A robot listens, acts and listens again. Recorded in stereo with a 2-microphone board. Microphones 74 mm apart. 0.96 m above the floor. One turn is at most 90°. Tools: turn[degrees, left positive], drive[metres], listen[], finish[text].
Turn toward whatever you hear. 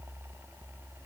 Action: listen[]
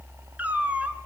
Thought: The cat meowing: about 20° right or 160° right.
Action: turn[-20]
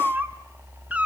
Thought: The cat meowing: about 20° right or 160° right.
Action: turn[-20]
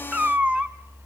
Thought: The cat meowing: about 15° right or 165° right.
Action: turn[-15]
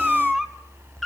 Action: turn[30]
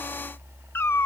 Thought: So it is at 150° left.
Action: turn[90]
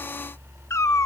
Thought: The cat meowing is now 40° left.
Action: turn[40]
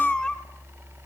Thought: The cat meowing is now 10° left.
Action: turn[10]
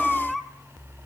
Action: finish[Facing the cat meowing.]